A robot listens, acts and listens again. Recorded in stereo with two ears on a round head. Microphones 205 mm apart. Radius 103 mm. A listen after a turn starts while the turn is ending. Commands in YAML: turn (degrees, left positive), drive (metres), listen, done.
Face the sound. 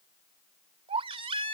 turn: -25
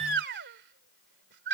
turn: -130
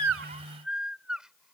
done: "Facing the baby crying."